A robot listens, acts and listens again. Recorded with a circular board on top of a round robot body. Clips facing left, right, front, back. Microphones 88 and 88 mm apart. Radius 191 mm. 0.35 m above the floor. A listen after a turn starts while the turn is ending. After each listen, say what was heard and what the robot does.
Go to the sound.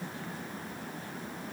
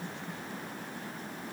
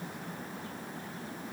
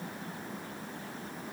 Keep listening.
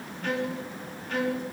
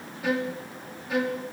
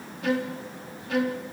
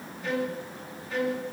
The violin: 10° right. Turn 10° right.
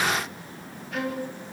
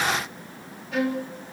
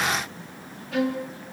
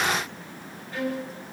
Drive 1.0 m forward.
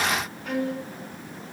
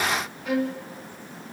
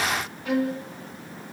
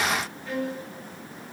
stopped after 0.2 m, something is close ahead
Blocked. The violin is further on, straight ahead.